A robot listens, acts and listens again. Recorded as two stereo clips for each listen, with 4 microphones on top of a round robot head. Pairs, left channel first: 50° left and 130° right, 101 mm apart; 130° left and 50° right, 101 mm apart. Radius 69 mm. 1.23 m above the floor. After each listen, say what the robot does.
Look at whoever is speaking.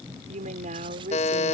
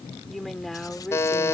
Turn 145° right.
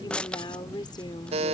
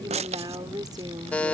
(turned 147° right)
Facing the woman speaking.